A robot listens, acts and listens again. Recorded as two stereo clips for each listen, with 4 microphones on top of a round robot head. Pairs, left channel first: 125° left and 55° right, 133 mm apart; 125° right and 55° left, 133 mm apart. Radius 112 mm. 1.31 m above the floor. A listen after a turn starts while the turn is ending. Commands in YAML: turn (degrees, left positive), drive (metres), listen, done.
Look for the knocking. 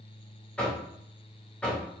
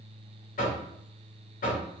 turn: -150
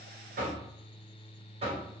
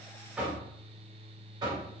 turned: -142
turn: -10
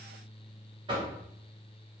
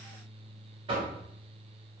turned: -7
done: "Found it: knocking, straight ahead."